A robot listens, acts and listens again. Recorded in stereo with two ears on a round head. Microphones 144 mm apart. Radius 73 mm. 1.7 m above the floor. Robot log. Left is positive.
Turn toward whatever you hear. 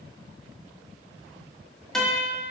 cmd yaw +30
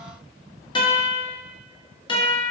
note: So it is at 150° left.
cmd yaw +150
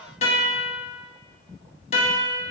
note: The guitar is now 40° left.
cmd yaw +40
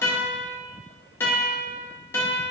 note: The guitar is now 15° left.
cmd yaw +15
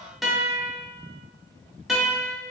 end: Found it: a guitar, straight ahead, under 1 m away.